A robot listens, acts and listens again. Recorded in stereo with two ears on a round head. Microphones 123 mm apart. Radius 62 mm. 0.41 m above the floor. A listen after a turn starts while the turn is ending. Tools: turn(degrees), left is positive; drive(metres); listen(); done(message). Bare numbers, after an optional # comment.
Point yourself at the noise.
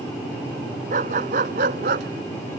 # The dog barking: about 70° right or 110° right.
turn(-70)
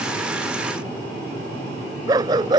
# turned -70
# So it is at 30° right.
turn(-30)
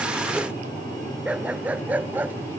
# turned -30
# The dog barking is now 15° right.
turn(-15)
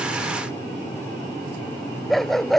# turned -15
done("Found it: a dog barking, straight ahead.")